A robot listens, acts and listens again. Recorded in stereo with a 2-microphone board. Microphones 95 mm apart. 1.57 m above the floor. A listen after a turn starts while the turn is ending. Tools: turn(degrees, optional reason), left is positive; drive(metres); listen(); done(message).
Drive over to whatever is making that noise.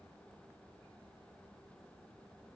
listen()
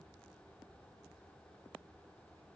listen()
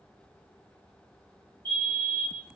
turn(degrees=20, reason="The fire alarm: about 20° left or 160° left.")
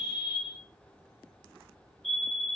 drive(metres=1.0)
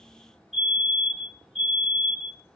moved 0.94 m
drive(metres=1.0)
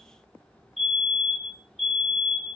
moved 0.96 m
drive(metres=1.0)
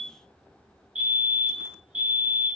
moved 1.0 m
turn(degrees=-15, reason="The fire alarm is now 15° right.")
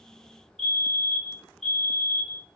drive(metres=1.0)
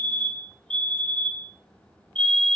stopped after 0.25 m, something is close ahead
turn(degrees=10, reason="The fire alarm is now 10° left.")
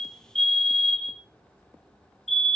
done("I am next to the fire alarm.")